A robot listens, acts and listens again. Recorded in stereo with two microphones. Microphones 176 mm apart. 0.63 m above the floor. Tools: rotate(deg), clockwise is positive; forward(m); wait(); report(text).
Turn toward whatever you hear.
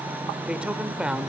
rotate(30)
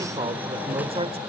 rotate(145)
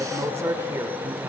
rotate(15)
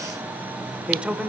report("Facing the man speaking.")